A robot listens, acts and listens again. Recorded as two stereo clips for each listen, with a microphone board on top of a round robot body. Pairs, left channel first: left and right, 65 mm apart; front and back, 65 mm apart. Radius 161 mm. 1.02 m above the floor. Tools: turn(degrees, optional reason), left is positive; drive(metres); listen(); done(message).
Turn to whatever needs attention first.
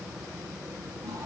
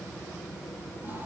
listen()
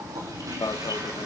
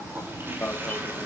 turn(degrees=70, reason="The alarm: 70° left.")
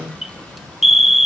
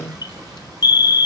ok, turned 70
done("Facing the alarm.")